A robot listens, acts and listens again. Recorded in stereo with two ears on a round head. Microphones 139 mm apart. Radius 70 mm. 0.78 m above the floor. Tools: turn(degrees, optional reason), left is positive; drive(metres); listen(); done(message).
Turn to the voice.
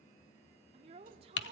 turn(degrees=-40, reason="The woman speaking: about 40° right or 140° right.")
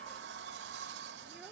listen()
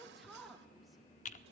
done("Facing the woman speaking.")